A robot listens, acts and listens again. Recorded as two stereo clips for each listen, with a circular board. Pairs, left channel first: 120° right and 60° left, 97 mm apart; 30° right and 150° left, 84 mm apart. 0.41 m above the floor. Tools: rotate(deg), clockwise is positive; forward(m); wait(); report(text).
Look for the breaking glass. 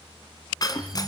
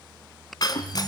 rotate(70)
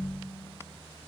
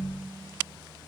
report("I heard breaking glass from this way, but can't make it out now.")